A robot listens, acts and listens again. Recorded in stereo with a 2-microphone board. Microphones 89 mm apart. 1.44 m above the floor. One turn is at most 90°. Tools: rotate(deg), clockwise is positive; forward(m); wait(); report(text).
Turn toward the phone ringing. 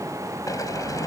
wait()
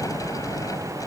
wait()
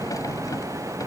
report("I can't make out a phone ringing to turn to.")